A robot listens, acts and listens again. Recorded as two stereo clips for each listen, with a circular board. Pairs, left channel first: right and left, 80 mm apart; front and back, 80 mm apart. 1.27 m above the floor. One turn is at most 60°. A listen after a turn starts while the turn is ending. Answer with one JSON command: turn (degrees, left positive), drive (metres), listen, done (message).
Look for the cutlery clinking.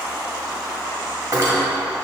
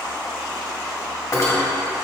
{"turn": 50}
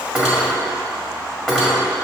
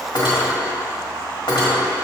{"done": "Facing the cutlery clinking."}